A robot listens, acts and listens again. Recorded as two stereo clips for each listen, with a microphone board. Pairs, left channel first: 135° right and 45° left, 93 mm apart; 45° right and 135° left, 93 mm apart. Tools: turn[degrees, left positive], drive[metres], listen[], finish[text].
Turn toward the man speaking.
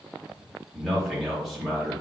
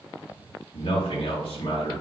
Thought: The man speaking: 45° right.
Action: turn[-45]
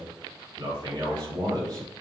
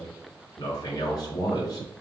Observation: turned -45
Action: finish[Found it: a man speaking, straight ahead, 2 to 4 m away.]